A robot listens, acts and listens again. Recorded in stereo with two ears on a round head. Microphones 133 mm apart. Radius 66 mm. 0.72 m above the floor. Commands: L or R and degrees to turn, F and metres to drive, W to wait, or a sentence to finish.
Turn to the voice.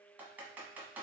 W
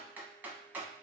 W
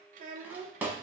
R60
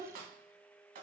R60
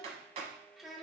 Found it: a child speaking, straight ahead.